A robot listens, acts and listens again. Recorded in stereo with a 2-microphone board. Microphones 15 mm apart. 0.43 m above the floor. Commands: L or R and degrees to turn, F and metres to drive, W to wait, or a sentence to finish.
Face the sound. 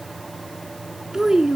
R35
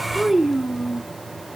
R10
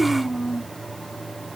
R15
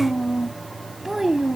R25
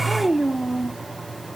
Found it: a child speaking, straight ahead.